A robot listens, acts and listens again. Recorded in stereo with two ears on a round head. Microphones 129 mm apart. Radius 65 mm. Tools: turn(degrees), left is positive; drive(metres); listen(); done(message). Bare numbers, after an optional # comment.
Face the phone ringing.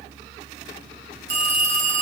turn(-90)
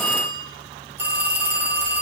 # So it is at 15° right.
turn(-15)
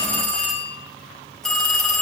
done("Found it: a phone ringing, straight ahead, over 4 m away.")